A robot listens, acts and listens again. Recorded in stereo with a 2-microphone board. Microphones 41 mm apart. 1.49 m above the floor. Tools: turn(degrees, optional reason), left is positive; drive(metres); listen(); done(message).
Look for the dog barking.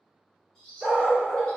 turn(degrees=-30)
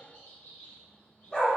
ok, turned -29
turn(degrees=25, reason="So it is at 25° left.")
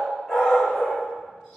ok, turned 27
turn(degrees=20, reason="The dog barking is now 20° left.")
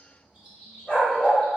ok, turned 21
turn(degrees=30, reason="The dog barking is now 30° left.")
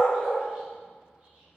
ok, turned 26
turn(degrees=25, reason="The dog barking is now 25° left.")
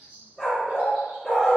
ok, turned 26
done("Found it: a dog barking, straight ahead.")